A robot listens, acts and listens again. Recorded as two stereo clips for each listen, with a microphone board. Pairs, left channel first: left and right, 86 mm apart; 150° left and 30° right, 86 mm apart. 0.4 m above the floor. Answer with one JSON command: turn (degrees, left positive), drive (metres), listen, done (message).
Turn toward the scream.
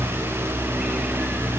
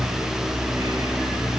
{"listen": true}
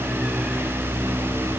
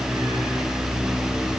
{"listen": true}
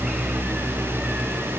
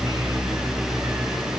{"done": "I can't make out a scream to turn to."}